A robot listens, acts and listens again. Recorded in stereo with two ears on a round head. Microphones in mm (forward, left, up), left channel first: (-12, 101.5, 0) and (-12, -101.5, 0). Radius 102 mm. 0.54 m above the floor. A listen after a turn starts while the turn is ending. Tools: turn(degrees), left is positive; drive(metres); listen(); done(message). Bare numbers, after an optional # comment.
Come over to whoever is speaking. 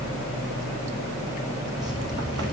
listen()
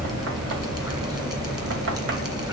listen()
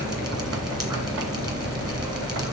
done("I can't make out anyone speaking to turn to.")